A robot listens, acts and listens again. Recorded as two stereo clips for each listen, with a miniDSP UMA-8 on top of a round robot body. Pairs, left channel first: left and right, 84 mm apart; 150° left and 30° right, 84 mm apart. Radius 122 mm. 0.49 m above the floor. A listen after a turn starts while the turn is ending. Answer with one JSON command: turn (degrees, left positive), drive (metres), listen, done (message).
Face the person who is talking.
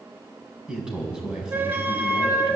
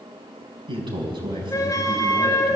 {"turn": -10}
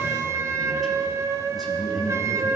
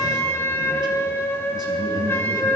{"done": "Found it: a man speaking, straight ahead, over 4 m away."}